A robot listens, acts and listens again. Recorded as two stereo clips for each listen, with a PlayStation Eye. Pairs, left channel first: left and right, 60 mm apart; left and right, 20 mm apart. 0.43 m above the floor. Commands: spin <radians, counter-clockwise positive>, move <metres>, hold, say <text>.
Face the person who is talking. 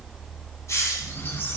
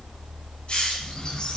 hold
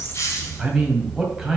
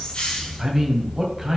spin -0.52
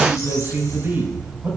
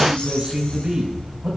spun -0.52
spin -2.44
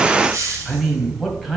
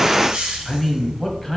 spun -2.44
say Found it: a man speaking, straight ahead, 2 to 4 m away.